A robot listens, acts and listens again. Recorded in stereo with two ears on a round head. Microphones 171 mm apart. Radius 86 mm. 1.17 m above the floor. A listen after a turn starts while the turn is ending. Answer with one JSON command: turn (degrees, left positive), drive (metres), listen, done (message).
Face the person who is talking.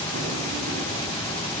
{"listen": true}
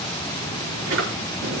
{"listen": true}
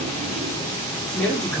{"turn": 30}
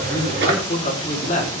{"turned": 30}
{"turn": 140}
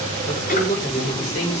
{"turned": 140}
{"turn": 35}
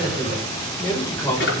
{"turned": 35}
{"turn": 15}
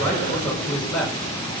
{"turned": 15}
{"done": "Found it: a man speaking, straight ahead, over 4 m away."}